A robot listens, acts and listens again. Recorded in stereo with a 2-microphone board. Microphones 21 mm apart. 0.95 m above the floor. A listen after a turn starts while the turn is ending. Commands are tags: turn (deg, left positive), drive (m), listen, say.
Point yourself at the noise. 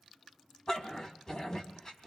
<turn deg="35"/>
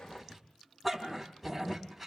<say>Found it: a dog barking, straight ahead, 2 to 4 m away.</say>